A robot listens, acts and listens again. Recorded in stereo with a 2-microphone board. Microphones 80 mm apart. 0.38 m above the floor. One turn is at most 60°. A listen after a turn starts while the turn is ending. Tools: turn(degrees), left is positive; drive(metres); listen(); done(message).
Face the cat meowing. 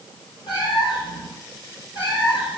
turn(degrees=60)
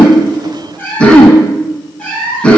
turn(degrees=10)
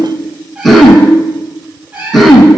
turn(degrees=-25)
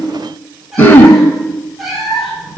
done("Found it: a cat meowing, straight ahead, 1 to 2 m away.")